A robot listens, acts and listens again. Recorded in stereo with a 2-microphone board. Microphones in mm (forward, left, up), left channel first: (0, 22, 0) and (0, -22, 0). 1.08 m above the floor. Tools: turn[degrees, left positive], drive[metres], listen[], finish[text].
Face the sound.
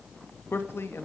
Thought: The man speaking: about 65° left or 115° left.
Action: turn[65]
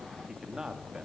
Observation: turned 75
Thought: So it is at 15° right.
Action: turn[-15]
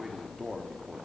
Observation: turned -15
Action: finish[Facing the man speaking.]